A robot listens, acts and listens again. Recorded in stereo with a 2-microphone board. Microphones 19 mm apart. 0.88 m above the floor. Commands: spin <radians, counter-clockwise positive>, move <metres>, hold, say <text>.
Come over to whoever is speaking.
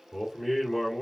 spin -0.52
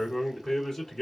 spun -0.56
spin 0.44
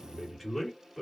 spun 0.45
move 1.0
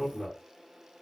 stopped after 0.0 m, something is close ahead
say Something is in my way. I am facing the man speaking but have not reached it.